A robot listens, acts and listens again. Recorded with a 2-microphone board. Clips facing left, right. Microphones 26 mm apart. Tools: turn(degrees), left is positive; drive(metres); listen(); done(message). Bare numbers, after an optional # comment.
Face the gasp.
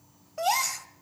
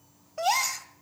turn(-30)
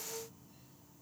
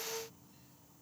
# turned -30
listen()
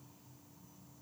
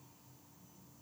done("I heard a gasp, but can't make it out now. It was about 20° left or 140° right.")